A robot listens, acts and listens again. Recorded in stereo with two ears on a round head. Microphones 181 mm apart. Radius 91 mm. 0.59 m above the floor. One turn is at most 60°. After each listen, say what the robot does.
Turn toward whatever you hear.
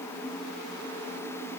Keep listening.
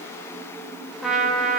Turn 30° left.
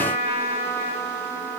Turn 30° right.
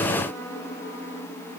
Keep listening.
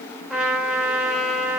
Facing the trumpet.